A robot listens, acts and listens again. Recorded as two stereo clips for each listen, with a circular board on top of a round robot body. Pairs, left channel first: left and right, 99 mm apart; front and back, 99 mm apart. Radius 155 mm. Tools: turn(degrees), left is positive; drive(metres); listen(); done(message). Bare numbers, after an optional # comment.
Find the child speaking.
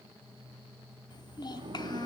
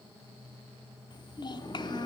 # The child speaking: 45° left.
turn(45)
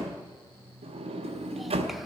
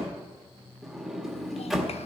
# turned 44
listen()
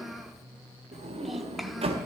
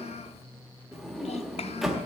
done("Found it: a child speaking, straight ahead, under 1 m away.")